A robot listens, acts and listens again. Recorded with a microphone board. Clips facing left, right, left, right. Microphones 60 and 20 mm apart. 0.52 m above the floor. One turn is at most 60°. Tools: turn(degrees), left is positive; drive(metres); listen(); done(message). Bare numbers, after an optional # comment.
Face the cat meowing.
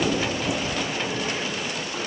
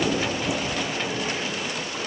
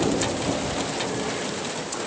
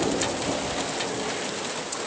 listen()
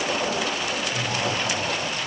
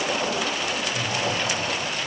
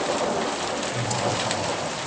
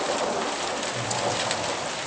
listen()
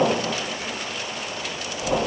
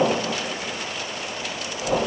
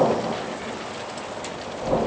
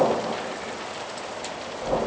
done("I can't make out a cat meowing to turn to.")